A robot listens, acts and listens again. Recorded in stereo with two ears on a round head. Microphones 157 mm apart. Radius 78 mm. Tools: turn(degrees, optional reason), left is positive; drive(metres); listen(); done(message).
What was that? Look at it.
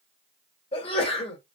turn(degrees=35, reason="The sneeze: about 35° left or 145° left.")
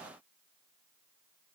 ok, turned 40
listen()
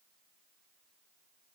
done("I heard a sneeze, but can't make it out now. It was about 5° right or 105° left.")